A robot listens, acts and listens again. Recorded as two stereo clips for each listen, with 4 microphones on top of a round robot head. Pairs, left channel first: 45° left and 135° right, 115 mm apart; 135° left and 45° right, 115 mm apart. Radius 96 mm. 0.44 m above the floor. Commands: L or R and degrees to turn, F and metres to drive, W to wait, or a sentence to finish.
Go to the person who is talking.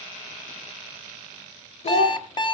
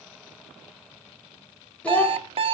L55
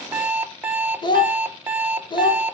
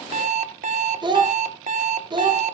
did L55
F1.0
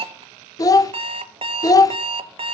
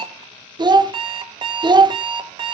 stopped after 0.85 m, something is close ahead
Arrived at the child speaking, straight ahead.